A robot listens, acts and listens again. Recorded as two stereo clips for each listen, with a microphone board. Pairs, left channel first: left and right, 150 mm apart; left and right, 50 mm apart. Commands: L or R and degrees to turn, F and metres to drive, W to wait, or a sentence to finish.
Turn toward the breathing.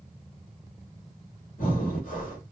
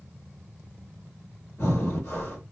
L65
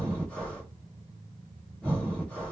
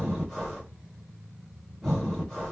L10
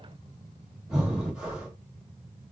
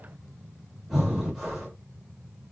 Facing the breathing.